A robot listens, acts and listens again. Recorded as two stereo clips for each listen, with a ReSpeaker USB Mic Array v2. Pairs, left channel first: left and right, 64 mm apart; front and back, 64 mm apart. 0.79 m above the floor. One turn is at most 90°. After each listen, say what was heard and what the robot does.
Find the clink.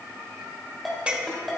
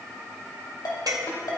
The clink: 160° right. Turn 90° right.
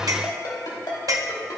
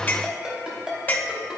The clink is now 60° right. Turn 60° right.
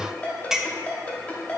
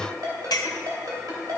Facing the clink, under 1 m away.